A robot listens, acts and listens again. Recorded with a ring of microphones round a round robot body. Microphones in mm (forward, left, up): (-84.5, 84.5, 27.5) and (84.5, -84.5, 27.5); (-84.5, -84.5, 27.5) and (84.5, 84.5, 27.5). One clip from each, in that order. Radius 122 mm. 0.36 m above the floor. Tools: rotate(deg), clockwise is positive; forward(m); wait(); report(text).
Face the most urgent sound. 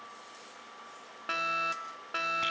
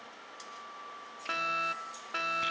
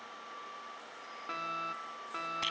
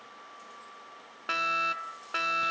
rotate(-45)
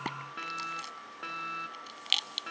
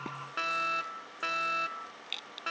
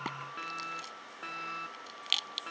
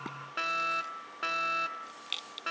report("Found it: a fire alarm, straight ahead.")